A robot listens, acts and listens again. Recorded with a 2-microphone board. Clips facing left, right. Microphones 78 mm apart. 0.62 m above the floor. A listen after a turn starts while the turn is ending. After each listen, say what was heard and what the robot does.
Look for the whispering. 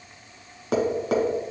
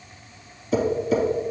Keep listening.
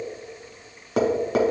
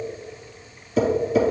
Keep listening.
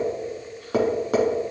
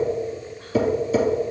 I can't make out whispering to turn to.